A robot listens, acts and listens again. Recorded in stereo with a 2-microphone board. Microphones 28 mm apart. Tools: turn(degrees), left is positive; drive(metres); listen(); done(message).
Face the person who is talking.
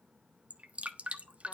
listen()
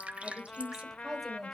turn(degrees=30)
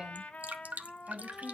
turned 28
turn(degrees=-20)
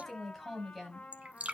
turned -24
turn(degrees=10)
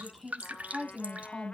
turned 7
done("Found it: a woman speaking, straight ahead, over 4 m away.")